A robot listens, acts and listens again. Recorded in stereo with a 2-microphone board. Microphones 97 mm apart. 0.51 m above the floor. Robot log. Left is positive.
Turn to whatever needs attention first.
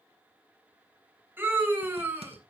note: The scream: about 20° right or 160° right.
cmd yaw -20
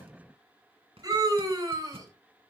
note: So it is at 135° right.
cmd yaw -135
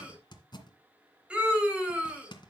note: The scream is now 10° right.
cmd yaw -10
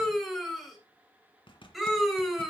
end: Found it: a scream, straight ahead, 2 to 4 m away.